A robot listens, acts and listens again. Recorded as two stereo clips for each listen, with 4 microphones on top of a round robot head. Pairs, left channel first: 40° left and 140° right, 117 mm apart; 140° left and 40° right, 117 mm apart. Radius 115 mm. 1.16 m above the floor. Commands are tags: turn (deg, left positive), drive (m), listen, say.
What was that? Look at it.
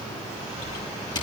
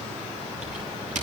<turn deg="-15"/>
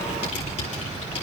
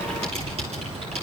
<say>Found it: typing on a keyboard, straight ahead.</say>